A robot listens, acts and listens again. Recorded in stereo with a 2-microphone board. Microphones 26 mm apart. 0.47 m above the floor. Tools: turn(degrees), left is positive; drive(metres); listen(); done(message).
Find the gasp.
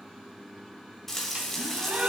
turn(degrees=-90)
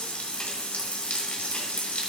done("I heard a gasp from this way, but can't make it out now.")